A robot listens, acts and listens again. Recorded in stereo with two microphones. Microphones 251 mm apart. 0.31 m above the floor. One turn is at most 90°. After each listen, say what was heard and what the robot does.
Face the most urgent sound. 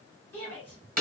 The shout: about 65° right or 115° right. Turn 65° right.
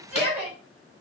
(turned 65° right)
Found it: a shout, straight ahead, 2 to 4 m away.